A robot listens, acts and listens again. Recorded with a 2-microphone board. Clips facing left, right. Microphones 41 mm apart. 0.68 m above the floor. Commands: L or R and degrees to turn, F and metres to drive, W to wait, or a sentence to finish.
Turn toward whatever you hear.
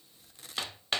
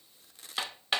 R30
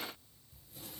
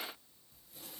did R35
W
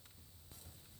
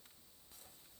W
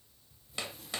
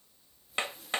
R135
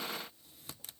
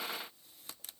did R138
W
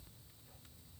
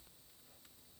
W
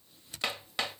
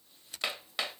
Found it: hammering, straight ahead, 2 to 4 m away.